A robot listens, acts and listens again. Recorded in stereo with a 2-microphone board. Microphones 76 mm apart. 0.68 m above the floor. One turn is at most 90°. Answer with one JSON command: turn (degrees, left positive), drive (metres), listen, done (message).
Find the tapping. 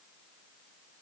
{"listen": true}
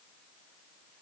{"listen": true}
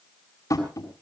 {"turn": 50}
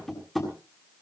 {"done": "Facing the tapping, over 4 m away."}